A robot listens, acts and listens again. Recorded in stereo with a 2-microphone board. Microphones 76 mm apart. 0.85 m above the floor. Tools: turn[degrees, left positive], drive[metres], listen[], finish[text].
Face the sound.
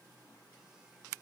Action: listen[]
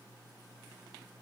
Action: listen[]
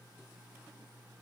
Action: finish[I can't make out anything to turn to.]